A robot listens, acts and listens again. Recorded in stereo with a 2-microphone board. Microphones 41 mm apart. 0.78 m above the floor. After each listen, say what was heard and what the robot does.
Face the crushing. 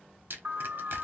The crushing: about 65° right or 115° right. Turn 65° right.
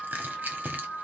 So it is at 45° right. Turn 45° right.
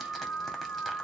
Keep listening.
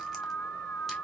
Keep listening.
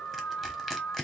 Facing the crushing.